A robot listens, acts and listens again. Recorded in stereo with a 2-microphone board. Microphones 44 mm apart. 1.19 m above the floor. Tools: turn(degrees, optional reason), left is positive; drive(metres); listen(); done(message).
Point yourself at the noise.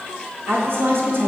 turn(degrees=-60, reason="The woman speaking: about 60° right or 120° right.")
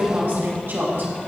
turn(degrees=-55, reason="So it is at 55° right.")
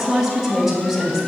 turn(degrees=-10, reason="The woman speaking is now 10° right.")
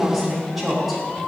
done("Found it: a woman speaking, straight ahead.")